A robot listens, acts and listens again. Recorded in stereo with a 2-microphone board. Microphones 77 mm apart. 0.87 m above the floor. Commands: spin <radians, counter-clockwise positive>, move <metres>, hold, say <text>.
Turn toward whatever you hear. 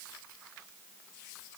hold
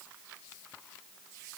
hold
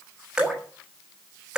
spin -0.52
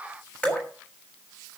spin 0.35
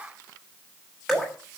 say Found it: dripping, straight ahead, over 4 m away.